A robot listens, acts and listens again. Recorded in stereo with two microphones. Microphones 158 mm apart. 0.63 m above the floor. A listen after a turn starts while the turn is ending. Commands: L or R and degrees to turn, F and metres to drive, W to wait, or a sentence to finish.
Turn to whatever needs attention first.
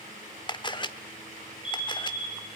R30
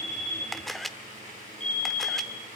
R145
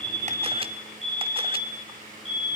Facing the fire alarm, over 4 m away.